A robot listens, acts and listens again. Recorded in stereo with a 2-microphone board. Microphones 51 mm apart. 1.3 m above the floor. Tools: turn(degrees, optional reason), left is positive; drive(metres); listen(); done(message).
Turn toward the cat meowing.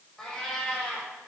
turn(degrees=30)
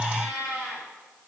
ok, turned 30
turn(degrees=-35, reason="So it is at 35° right.")
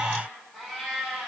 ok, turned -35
done("Facing the cat meowing, over 4 m away.")